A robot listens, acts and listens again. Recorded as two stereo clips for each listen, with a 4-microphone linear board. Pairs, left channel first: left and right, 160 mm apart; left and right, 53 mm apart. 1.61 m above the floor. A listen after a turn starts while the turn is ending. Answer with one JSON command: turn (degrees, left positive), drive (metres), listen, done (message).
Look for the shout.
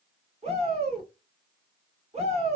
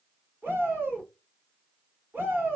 {"turn": -40}
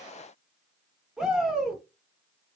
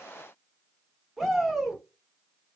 {"done": "Found it: a shout, straight ahead, 1 to 2 m away."}